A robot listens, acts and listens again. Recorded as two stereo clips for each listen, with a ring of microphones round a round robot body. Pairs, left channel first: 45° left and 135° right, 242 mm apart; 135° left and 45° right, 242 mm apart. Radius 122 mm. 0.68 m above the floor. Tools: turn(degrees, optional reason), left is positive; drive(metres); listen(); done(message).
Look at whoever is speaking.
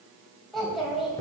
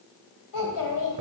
turn(degrees=135, reason="The child speaking: 135° left.")
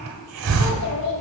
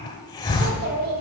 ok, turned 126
done("Found it: a child speaking, straight ahead, 2 to 4 m away.")